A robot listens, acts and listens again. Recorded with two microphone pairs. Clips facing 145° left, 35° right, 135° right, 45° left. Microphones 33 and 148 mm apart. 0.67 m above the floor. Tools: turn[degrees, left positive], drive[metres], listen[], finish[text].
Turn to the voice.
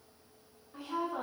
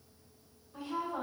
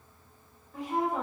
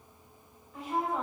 Thought: The woman speaking: straight behind.
Action: turn[180]
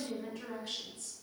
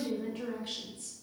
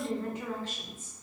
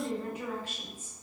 Thought: The woman speaking is now 35° right.
Action: turn[-35]
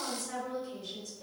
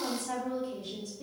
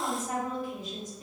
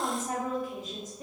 Action: finish[Facing the woman speaking, 1 to 2 m away.]